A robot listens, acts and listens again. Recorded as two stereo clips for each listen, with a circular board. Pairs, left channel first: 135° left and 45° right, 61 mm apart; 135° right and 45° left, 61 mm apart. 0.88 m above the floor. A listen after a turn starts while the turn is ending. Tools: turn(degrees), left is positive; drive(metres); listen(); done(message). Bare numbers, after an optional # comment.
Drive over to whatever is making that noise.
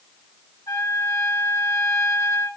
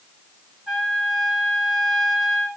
# The trumpet: 130° left.
turn(130)
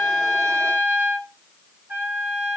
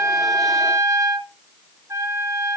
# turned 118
# The trumpet is now 10° left.
turn(10)
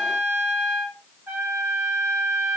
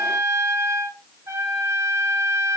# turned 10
drive(1.0)
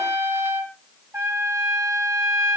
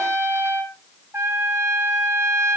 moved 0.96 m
drive(1.0)
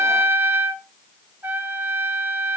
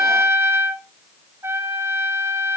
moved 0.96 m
drive(1.0)
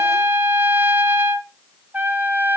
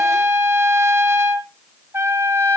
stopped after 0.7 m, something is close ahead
done("I am next to the trumpet.")